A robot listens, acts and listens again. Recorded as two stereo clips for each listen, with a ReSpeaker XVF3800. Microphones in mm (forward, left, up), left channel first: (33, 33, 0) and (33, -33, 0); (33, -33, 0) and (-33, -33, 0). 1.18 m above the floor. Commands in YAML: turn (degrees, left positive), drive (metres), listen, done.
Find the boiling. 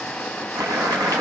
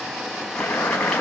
turn: -75
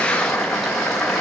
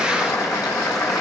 done: "Found it: boiling, straight ahead, over 4 m away."